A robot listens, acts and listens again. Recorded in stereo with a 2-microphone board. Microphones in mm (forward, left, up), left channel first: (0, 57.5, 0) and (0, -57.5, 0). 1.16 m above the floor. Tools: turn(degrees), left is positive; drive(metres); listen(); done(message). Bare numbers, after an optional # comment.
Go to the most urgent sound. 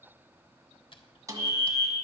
# The fire alarm: about 25° left or 155° left.
turn(25)
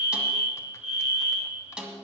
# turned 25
# So it is at 130° left.
turn(130)
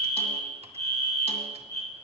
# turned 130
# The fire alarm is now 30° left.
turn(30)
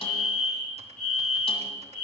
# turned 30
drive(1.0)
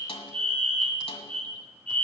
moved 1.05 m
# The fire alarm is now 10° left.
turn(10)
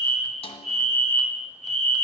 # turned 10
drive(1.0)
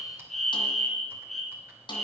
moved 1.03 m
drive(1.0)
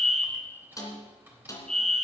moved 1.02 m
drive(1.0)
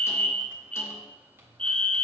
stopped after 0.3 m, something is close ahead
# The fire alarm is now 15° left.
turn(15)
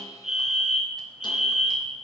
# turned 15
done("Arrived at the fire alarm, straight ahead.")